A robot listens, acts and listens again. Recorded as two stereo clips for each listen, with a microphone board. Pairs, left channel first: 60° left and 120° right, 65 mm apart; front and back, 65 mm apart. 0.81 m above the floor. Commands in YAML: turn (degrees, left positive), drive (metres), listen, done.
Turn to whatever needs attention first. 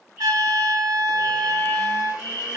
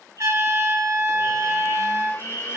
turn: -170
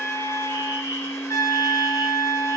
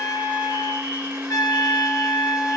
listen: true
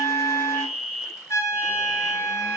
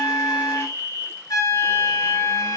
turn: -10
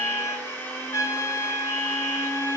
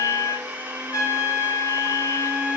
listen: true
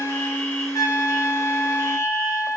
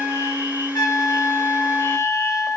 listen: true
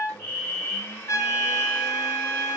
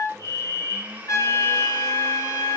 done: "Found it: a fire alarm, straight ahead, 2 to 4 m away."